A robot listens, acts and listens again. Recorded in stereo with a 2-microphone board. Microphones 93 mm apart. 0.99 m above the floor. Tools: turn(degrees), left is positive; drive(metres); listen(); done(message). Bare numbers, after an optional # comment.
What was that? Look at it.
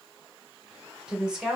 turn(-30)
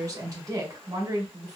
# So it is at 140° right.
turn(-140)
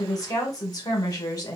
# The woman speaking is now 40° left.
turn(40)
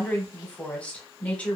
# The woman speaking is now 15° left.
turn(15)
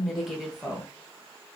done("Found it: a woman speaking, straight ahead.")